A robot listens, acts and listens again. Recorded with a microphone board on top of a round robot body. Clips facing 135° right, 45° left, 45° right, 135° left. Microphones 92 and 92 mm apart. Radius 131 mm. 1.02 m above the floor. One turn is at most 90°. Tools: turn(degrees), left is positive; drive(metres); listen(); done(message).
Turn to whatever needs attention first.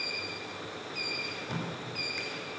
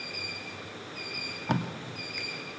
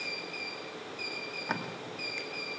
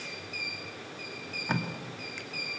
listen()
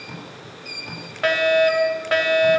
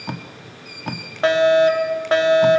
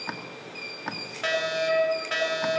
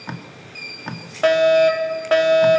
turn(degrees=90)
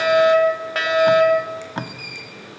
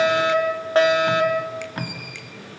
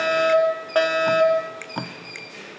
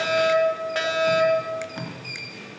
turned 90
turn(degrees=-10)
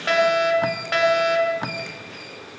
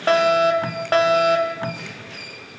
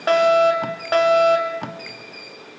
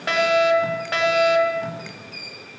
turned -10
done("Found it: a fire alarm, straight ahead.")